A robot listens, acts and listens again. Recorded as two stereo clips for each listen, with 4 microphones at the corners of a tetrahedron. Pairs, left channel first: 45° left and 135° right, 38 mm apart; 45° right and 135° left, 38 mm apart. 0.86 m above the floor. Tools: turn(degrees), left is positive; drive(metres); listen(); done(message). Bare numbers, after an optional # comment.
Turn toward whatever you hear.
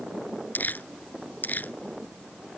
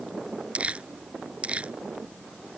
# The crumpling: 80° left.
turn(80)
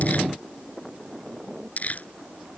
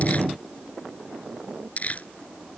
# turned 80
done("Facing the crumpling.")